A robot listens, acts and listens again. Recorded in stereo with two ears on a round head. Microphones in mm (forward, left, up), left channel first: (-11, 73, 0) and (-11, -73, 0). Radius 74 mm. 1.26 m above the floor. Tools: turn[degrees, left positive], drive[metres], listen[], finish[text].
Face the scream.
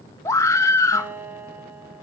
Thought: The scream: about 20° left or 160° left.
Action: turn[20]
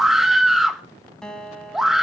Action: finish[Found it: a scream, straight ahead, 1 to 2 m away.]